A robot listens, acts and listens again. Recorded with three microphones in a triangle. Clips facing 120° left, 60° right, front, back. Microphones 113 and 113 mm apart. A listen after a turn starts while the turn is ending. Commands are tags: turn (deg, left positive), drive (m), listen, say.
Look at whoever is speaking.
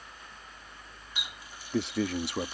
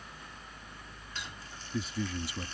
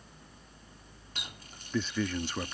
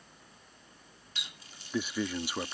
<turn deg="105"/>
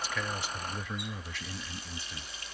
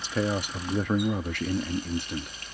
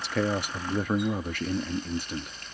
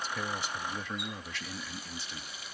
<turn deg="-35"/>
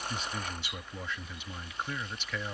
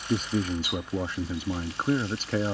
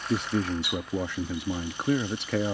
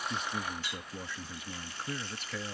<turn deg="-10"/>
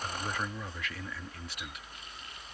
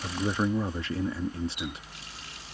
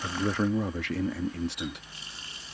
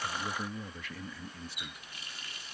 <say>Found it: a man speaking, straight ahead.</say>